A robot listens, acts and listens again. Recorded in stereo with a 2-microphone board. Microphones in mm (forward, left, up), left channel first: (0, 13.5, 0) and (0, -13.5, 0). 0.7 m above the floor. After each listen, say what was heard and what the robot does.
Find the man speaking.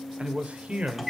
The man speaking: about 55° right or 125° right. Turn 55° right.
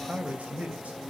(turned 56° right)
So it is at 65° right. Turn 65° right.
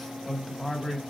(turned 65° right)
Facing the man speaking.